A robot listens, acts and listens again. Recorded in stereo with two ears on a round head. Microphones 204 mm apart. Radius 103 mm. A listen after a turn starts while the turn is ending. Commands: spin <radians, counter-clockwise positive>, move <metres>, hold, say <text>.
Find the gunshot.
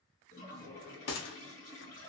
spin 1.05
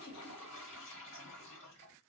hold
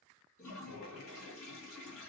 say I heard a gunshot, but can't make it out now. It was about straight ahead or 60° left.